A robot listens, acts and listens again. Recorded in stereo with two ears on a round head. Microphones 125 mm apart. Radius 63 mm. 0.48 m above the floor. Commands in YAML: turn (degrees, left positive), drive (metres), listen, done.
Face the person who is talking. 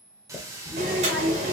turn: -30
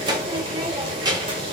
turn: -150
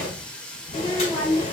turn: 20
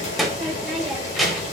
done: "Found it: a child speaking, straight ahead."